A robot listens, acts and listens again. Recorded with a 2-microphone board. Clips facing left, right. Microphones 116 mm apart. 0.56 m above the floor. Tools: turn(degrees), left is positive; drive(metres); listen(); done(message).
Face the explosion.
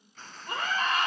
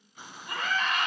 turn(degrees=-30)
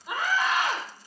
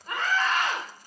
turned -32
listen()
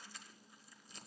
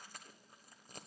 done("I heard an explosion, but can't make it out now. It was about 20° left or 135° right.")